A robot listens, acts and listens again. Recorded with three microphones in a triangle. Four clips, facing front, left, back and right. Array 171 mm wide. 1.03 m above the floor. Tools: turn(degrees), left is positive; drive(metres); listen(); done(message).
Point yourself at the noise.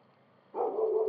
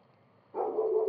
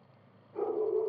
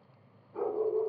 turn(degrees=50)
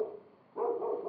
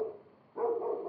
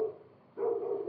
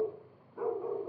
turn(degrees=40)
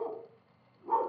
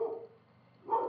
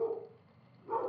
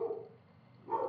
turn(degrees=15)
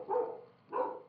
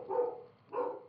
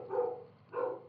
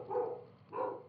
done("Found it: a dog barking, straight ahead, 2 to 4 m away.")